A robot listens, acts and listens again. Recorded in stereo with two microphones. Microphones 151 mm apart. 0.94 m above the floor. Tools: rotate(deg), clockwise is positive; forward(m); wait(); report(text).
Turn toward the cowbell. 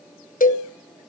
rotate(-65)
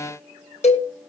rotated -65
rotate(-45)
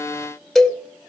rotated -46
report("Found it: a cowbell, straight ahead.")